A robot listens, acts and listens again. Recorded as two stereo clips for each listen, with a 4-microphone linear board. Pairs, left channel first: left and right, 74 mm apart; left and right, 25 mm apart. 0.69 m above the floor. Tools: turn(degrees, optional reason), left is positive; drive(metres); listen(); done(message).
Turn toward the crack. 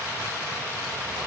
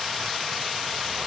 listen()
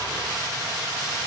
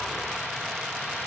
listen()
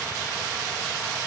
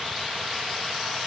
done("I can't make out a crack.")